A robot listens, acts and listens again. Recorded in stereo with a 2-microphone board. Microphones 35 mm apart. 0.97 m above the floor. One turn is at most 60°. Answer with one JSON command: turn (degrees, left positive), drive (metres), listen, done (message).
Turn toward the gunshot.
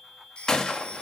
{"turn": 20}
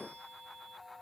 {"listen": true}
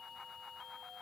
{"done": "I heard a gunshot, but can't make it out now. It was about straight ahead or 140° left."}